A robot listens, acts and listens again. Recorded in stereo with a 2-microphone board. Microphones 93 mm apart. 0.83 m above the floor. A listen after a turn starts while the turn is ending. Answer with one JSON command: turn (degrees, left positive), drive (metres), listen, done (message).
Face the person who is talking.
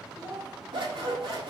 {"turn": -45}
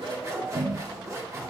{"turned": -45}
{"listen": true}
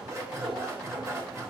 {"listen": true}
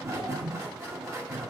{"done": "I heard a child speaking, but can't make it out now. It was about straight ahead or 90° right."}